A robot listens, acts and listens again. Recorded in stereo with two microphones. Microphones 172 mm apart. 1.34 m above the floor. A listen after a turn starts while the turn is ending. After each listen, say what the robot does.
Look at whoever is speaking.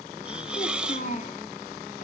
Turn 50° left.
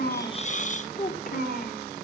Turn 60° left.
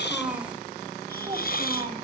Turn 25° right.
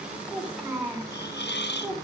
Facing the child speaking.